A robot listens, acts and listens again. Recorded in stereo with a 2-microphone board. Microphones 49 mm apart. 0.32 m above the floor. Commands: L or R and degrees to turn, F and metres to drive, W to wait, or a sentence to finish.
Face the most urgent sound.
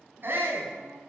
R45
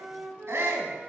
R80
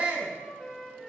R30
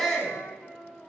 Facing the shout, 2 to 4 m away.